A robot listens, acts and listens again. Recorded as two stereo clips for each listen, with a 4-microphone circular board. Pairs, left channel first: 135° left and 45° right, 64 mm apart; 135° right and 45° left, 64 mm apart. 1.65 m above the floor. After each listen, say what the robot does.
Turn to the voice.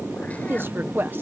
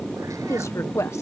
Turn 100° right.
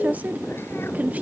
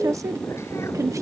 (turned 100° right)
Turn 20° left.
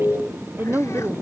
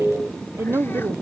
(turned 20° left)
Found it: a woman speaking, straight ahead.